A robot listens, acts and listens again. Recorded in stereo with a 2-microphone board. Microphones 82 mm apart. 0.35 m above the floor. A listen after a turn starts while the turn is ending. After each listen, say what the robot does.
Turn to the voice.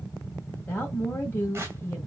Turn 25° left.
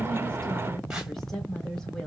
Found it: a woman speaking, straight ahead, 1 to 2 m away.